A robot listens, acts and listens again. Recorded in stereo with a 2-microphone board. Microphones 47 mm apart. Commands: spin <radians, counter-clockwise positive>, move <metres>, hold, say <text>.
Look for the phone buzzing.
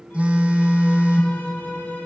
spin -0.44
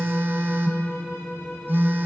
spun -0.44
spin -2.18
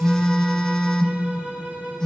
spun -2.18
spin 0.26
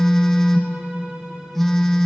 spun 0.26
say Found it: a phone buzzing, straight ahead.